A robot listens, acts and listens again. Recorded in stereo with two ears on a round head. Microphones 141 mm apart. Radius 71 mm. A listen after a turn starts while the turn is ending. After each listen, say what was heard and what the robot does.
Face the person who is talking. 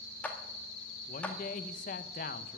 The man speaking: about 50° left or 130° left. Turn 50° left.
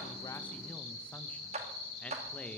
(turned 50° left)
Keep listening.
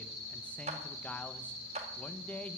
So it is at 10° left. Turn 10° left.
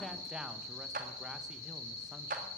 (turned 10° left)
Keep listening.
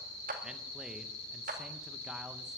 Keep listening.
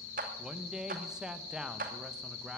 Found it: a man speaking, straight ahead.